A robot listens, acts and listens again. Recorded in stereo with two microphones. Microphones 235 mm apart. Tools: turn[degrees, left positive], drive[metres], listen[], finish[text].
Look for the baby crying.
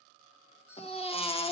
Thought: The baby crying: about 25° left or 155° left.
Action: turn[25]
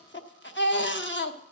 Thought: So it is at 130° left.
Action: turn[130]
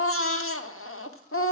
Thought: The baby crying is now 60° left.
Action: turn[60]
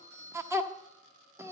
Thought: The baby crying is now 10° right.
Action: turn[-10]
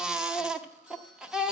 Action: finish[Facing the baby crying.]